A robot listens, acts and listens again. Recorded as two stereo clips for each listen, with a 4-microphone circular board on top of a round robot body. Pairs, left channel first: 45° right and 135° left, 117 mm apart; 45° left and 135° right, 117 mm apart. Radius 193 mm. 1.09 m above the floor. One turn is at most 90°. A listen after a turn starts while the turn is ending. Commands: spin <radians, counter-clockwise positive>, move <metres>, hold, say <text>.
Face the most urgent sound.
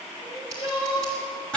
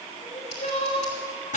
say Found it: crying, straight ahead.